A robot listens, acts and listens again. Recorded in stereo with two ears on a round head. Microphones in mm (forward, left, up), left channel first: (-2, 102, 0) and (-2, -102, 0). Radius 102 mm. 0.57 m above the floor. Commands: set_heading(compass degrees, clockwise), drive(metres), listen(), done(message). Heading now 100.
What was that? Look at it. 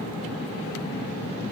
listen()
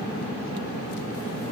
listen()
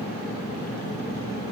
done("I can't make out anything.")